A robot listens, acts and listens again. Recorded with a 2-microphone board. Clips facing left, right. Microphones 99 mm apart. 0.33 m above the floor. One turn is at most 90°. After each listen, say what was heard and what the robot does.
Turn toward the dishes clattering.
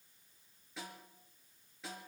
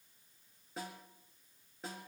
Keep listening.
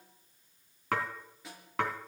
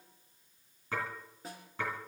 The dishes clattering: about 70° left or 110° left. Turn 70° left.
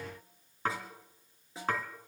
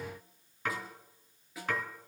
So it is at 35° left. Turn 35° left.
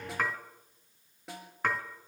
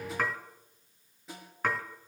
Facing the dishes clattering, 2 to 4 m away.